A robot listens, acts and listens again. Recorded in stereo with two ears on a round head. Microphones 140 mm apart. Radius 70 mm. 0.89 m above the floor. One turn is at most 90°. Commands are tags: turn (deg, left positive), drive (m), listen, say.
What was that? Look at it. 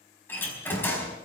<turn deg="30"/>
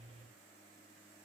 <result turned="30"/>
<listen/>
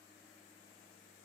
<say>I heard a door slam, but can't make it out now. It was about 15° right or 135° left.</say>